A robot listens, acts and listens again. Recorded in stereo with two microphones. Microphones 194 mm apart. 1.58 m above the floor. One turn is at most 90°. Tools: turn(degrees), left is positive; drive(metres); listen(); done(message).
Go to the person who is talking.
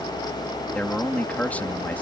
turn(degrees=30)
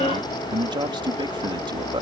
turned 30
turn(degrees=-25)
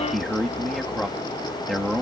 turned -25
drive(metres=1.0)
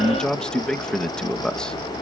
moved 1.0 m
drive(metres=1.0)
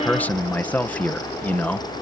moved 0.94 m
turn(degrees=10)
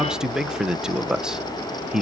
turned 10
drive(metres=1.0)
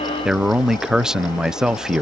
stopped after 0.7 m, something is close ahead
done("I am next to the man speaking.")